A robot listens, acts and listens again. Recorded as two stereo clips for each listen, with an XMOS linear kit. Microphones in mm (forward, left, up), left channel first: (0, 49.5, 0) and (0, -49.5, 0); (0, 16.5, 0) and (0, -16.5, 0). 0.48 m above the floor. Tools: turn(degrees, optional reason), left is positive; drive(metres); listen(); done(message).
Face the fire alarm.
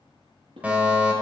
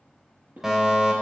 turn(degrees=-30)
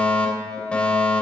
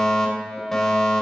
turn(degrees=15, reason="So it is at 15° left.")
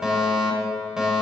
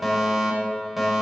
done("Facing the fire alarm.")